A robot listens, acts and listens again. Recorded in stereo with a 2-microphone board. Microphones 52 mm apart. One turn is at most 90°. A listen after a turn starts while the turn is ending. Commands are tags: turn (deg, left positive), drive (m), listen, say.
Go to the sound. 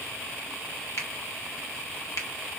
<turn deg="60"/>
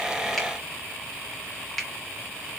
<drive m="1.0"/>
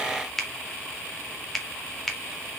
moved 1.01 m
<drive m="1.0"/>
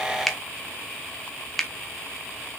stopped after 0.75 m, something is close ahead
<say>Arrived at the finger snap, straight ahead.</say>